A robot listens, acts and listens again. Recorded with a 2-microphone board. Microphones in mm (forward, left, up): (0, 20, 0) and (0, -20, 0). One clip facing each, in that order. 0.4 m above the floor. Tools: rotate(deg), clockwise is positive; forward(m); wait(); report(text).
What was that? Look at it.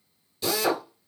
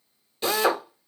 rotate(35)
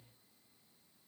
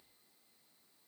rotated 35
wait()
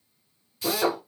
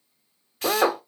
rotate(105)
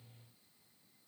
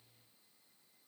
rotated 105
wait()
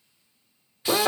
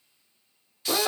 rotate(-25)
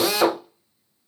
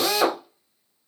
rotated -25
report("Facing the drill.")